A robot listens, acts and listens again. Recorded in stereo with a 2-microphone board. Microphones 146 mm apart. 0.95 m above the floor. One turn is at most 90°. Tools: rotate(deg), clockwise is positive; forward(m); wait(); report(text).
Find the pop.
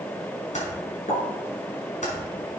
rotate(-65)
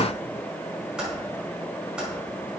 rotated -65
wait()
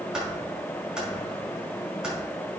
report("I heard a pop, but can't make it out now. It was about straight ahead or 50° left.")